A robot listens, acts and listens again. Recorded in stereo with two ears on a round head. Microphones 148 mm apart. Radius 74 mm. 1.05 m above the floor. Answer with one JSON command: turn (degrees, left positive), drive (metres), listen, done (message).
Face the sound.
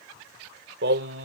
{"turn": -90}
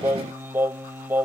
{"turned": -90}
{"turn": -10}
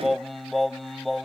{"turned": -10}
{"done": "Found it: singing, straight ahead."}